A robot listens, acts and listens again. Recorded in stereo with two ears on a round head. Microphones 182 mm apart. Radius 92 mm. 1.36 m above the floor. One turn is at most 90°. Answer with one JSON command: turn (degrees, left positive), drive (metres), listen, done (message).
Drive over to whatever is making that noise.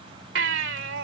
{"turn": -60}
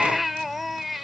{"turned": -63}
{"drive": 1.0}
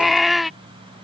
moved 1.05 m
{"drive": 1.0}
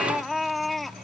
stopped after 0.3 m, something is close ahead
{"done": "Arrived at the baby crying, straight ahead."}